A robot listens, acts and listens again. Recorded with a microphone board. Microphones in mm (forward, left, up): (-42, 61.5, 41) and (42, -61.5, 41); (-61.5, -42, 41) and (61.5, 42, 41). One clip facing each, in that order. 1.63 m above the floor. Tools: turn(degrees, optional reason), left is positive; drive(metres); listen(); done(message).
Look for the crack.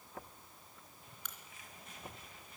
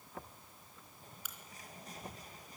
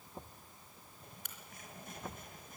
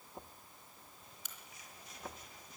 turn(degrees=-140, reason="The crack: 140° right.")
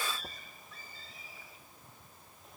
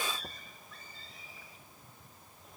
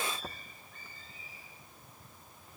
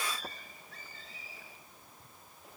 done("Facing where the crack came from. I can't hear it now.")